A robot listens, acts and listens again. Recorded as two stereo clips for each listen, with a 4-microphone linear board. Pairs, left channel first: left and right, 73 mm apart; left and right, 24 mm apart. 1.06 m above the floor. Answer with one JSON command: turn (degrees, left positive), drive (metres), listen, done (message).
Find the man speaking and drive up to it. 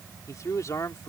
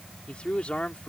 {"turn": 50}
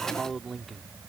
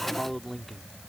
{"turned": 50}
{"drive": 1.0}
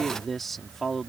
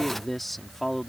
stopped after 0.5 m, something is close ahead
{"done": "Blocked. The man speaking is further on, straight ahead."}